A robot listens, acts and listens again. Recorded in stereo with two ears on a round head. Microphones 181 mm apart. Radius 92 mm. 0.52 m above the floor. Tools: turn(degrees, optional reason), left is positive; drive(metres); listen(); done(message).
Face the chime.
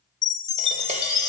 turn(degrees=15, reason="The chime: about 15° left or 165° left.")
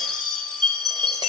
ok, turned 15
done("Found it: a chime, straight ahead, 2 to 4 m away.")